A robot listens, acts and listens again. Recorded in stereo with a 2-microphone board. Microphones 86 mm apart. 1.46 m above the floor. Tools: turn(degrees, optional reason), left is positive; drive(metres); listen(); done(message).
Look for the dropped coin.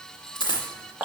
turn(degrees=60, reason="The dropped coin: about 60° left or 120° left.")
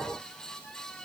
listen()
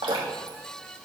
done("I heard a dropped coin, but can't make it out now. It was about straight ahead or 60° left.")